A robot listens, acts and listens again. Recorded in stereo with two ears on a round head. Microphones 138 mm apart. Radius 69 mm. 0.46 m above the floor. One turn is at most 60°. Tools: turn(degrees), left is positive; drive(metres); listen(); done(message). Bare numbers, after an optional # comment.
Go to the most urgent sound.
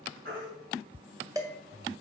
# The baby crying: about 70° right or 110° right.
turn(-60)
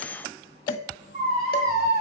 # So it is at 45° right.
turn(-45)
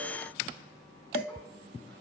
listen()
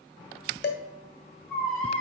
# The baby crying is now 10° left.
turn(10)
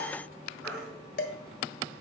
drive(1.0)
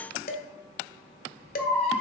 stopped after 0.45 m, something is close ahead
done("Blocked. The baby crying is further on, straight ahead.")